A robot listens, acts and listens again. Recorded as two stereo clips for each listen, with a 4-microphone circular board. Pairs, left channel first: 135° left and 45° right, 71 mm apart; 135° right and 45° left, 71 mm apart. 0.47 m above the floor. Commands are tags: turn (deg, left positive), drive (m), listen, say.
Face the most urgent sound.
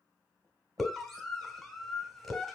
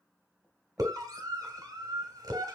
<turn deg="50"/>
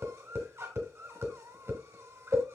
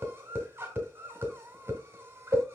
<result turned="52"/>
<say>Found it: a scream, straight ahead.</say>